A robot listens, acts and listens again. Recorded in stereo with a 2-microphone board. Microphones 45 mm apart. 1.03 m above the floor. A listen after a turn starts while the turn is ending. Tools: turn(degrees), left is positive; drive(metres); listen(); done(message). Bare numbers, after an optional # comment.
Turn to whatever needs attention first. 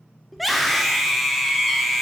turn(30)
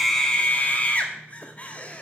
# So it is at 145° left.
turn(145)
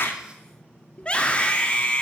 # The scream is now 25° left.
turn(25)
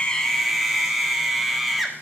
done("Facing the scream, 1 to 2 m away.")